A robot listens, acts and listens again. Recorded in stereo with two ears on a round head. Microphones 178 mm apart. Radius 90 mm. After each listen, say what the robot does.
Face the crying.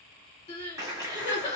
Turn 30° left.
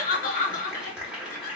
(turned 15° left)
Turn 140° left.
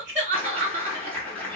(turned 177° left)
Turn 45° right.
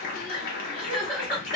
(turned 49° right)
Facing the crying.